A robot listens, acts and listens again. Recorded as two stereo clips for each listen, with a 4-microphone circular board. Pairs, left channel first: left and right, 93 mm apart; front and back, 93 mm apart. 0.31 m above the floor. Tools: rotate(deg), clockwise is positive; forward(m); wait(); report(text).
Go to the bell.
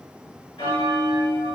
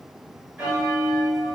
rotate(-100)
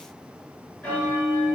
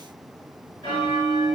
rotate(-10)
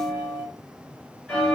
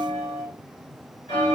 forward(1.0)
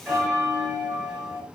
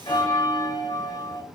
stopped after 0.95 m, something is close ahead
rotate(10)
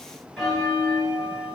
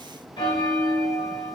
report("I am next to the bell.")